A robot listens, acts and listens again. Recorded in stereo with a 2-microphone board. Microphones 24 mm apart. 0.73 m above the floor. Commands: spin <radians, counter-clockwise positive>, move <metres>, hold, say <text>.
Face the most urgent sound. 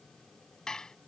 hold
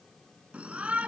spin -1.13
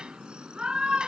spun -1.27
spin -0.70
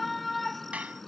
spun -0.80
say Found it: a shout, straight ahead.